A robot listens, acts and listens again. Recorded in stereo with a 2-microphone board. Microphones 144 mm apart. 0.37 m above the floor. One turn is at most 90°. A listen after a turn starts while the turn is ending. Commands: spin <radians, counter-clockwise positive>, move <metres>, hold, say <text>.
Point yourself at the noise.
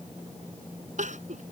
spin -1.13
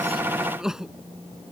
say Found it: crying, straight ahead.